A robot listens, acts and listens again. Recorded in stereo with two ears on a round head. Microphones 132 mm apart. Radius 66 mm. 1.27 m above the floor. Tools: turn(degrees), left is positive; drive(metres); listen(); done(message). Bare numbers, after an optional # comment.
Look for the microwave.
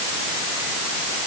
listen()
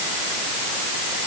listen()
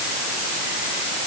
done("I can't make out a microwave.")